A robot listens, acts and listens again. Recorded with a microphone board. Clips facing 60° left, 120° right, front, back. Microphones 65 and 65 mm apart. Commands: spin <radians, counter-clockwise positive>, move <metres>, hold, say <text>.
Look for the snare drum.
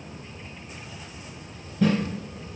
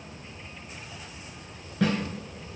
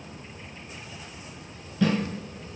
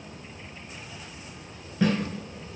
spin -2.09
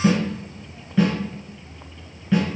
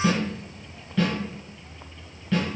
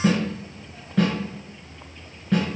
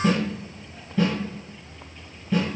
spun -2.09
spin -0.35
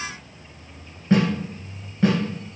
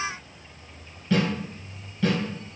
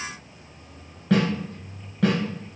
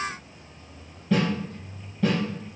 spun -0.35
say Facing the snare drum.